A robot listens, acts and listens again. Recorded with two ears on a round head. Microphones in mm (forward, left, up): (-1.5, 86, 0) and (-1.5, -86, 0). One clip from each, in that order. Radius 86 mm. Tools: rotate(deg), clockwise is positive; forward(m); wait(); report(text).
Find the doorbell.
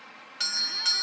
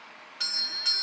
rotate(-30)
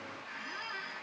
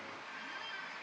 wait()
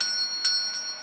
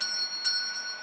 rotate(-135)
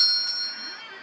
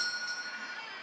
rotate(-40)
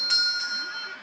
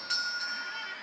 rotate(-25)
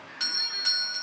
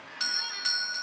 rotate(10)
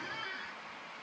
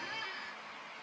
wait()
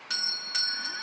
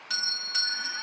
report("Facing the doorbell.")